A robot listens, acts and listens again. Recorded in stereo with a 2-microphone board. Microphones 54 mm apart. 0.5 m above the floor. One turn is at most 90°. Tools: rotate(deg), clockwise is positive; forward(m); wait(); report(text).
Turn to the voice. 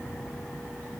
wait()
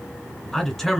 rotate(-30)
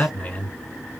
rotate(-90)
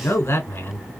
rotate(-65)
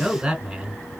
rotate(15)
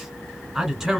report("Facing the man speaking.")